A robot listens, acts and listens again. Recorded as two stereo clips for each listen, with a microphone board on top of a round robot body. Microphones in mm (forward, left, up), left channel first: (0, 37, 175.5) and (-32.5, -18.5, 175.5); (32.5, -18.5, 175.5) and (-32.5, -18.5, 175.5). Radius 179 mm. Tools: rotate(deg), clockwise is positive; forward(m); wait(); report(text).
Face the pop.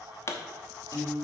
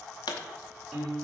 rotate(-10)
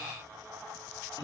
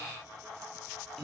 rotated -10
report("I heard a pop from this way, but can't make it out now.")